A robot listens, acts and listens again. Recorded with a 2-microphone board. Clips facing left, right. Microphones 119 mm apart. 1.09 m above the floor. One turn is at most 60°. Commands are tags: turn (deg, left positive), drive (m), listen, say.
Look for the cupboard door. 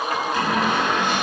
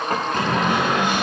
<turn deg="-55"/>
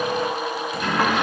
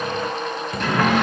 <turn deg="-60"/>
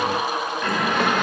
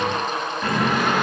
<say>Found it: a cupboard door, straight ahead, over 4 m away.</say>